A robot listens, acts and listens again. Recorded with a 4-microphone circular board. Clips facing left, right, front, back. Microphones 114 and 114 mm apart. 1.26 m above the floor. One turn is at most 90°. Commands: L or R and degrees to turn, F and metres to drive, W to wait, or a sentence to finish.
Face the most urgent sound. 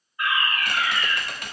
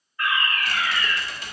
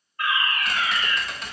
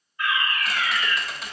L25
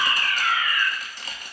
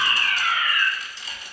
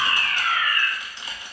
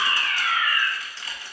Facing the fire alarm.